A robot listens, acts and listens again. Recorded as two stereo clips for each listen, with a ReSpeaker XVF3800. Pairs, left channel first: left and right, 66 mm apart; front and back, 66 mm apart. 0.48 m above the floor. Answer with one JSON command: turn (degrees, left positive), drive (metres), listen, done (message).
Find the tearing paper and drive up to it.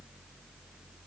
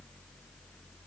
{"listen": true}
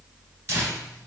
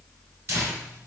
{"turn": -135}
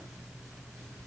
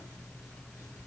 {"listen": true}
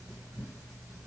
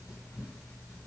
{"turn": -45}
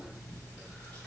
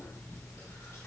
{"turn": 15}
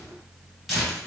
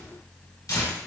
{"drive": 1.0}
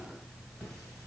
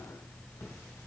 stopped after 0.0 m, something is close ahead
{"done": "Blocked. The tearing paper is further on, straight ahead."}